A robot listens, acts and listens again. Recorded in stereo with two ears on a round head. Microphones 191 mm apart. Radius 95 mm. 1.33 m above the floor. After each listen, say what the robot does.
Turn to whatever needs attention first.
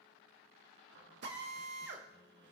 Keep listening.
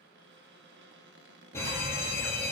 Turn 30° left.
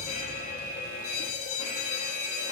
Turn 135° left.
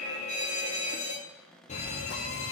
Turn 35° left.
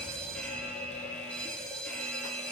Facing the fire alarm.